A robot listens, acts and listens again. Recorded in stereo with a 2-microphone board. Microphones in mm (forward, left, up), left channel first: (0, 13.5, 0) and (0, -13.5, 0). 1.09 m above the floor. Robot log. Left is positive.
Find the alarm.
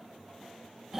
cmd idle
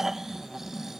cmd idle
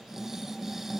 end: I can't make out an alarm to turn to.